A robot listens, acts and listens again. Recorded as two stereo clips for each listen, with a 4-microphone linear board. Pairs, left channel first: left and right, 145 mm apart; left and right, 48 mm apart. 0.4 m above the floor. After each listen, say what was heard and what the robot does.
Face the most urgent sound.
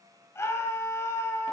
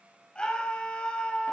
The scream: about 20° left or 160° left. Turn 20° left.
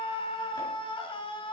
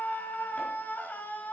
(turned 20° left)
So it is at 135° left. Turn 135° left.
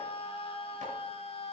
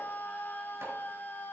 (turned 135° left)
The scream is now 45° left. Turn 45° left.
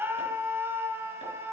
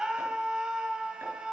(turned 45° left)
The scream is now 20° right. Turn 20° right.
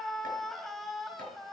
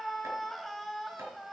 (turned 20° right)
Found it: a scream, straight ahead, 2 to 4 m away.